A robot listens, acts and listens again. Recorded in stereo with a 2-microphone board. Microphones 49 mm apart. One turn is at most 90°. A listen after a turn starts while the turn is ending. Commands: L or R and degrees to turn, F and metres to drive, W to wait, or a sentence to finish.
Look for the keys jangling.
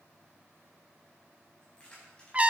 L20
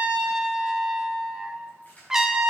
L30
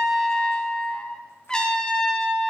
W
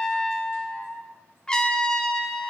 W
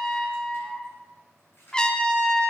L90
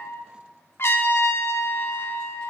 L35
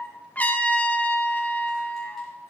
W
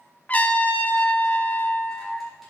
I heard keys jangling from this way, but can't make it out now.